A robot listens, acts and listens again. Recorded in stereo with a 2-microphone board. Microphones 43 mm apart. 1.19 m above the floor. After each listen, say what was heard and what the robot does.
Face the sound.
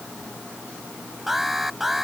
Turn 30° right.
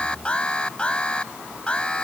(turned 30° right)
So it is at 25° left. Turn 25° left.
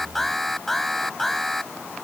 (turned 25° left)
Found it: an alarm, straight ahead.